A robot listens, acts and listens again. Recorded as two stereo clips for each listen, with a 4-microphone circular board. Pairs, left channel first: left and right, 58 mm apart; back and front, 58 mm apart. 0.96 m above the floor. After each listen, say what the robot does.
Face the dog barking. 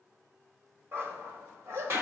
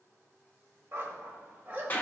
Turn 60° right.
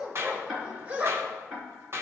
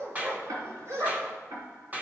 Turn 35° right.
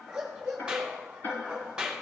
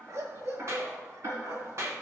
Turn 20° right.
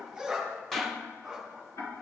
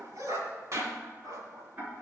Found it: a dog barking, straight ahead.